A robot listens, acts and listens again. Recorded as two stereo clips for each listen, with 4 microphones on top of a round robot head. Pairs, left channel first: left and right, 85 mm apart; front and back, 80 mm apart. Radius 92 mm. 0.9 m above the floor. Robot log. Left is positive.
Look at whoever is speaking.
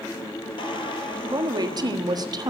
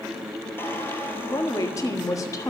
note: The woman speaking: 50° right.
cmd yaw -50
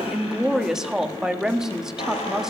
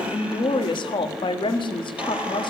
end: Found it: a woman speaking, straight ahead, 1 to 2 m away.